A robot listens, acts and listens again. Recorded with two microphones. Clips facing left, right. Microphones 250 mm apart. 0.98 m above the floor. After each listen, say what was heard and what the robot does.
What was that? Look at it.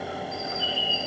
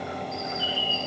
Turn 30° right.
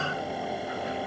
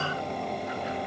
Keep listening.
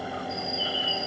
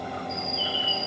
So it is at 20° left. Turn 20° left.
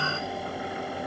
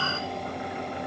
Keep listening.
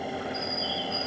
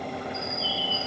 Facing the bird, 1 to 2 m away.